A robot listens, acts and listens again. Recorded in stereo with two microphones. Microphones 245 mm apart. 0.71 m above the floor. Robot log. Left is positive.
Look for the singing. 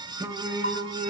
note: The singing: about 25° right or 155° right.
cmd yaw -25
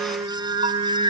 note: The singing: about 25° right or 155° right.
cmd yaw -25
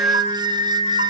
note: The singing: about 25° right or 155° right.
cmd yaw -25
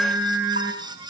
cmd yaw -30
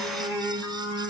end: Found it: singing, straight ahead.